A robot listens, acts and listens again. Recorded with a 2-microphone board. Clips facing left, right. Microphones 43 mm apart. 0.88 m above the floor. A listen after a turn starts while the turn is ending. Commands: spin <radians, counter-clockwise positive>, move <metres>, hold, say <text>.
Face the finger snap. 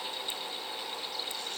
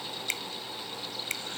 spin -1.57
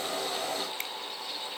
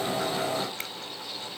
hold
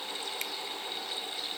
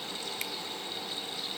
hold
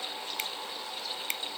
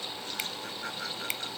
say Found it: a finger snap, straight ahead.